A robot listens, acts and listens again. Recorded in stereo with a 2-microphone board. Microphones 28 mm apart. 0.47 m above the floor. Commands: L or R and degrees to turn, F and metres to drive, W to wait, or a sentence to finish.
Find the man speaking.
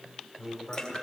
L20
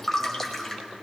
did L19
W
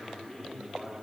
L25
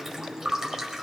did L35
L130
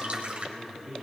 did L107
L35
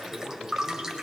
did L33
Found it: a man speaking, straight ahead, over 4 m away.